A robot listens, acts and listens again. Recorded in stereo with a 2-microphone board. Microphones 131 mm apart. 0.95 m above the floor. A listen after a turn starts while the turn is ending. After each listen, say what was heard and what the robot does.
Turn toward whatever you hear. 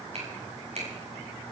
The finger snap: about 60° right or 120° right. Turn 60° right.
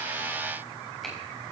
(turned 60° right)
Keep listening.
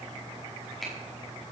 Facing the finger snap.